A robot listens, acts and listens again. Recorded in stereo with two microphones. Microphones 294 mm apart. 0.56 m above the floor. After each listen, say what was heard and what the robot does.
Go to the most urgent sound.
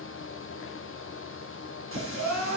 Turn 90° right.
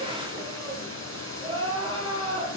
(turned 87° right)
So it is at 15° right. Turn 15° right.
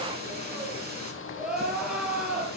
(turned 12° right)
Drive 1.0 m forward.
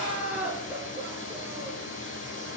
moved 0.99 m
Drive 1.0 m forward.
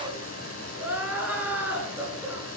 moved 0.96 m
Drive 1.0 m forward.
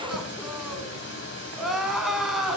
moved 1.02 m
Drive 1.0 m forward.
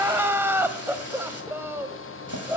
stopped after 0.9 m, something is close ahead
The crying is now 10° right. Turn 10° right.
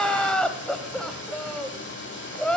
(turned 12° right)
Arrived at the crying, straight ahead.